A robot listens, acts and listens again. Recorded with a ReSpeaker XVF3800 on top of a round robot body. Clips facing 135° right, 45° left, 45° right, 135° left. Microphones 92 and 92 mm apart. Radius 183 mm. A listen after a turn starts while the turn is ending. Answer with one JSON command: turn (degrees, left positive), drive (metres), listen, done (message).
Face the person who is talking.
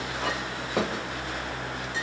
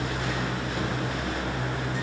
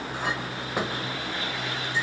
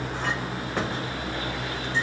{"listen": true}
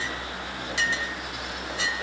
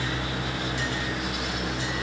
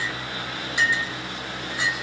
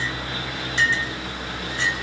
{"listen": true}
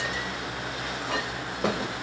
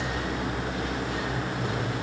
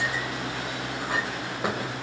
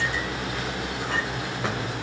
{"done": "I can't make out anyone speaking, only a clink."}